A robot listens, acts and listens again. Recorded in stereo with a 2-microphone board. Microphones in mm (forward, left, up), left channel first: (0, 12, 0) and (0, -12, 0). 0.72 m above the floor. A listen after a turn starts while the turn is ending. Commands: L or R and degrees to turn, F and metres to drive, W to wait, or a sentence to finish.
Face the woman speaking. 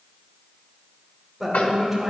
R30
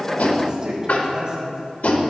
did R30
R140
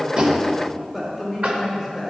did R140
Found it: a woman speaking, straight ahead, 2 to 4 m away.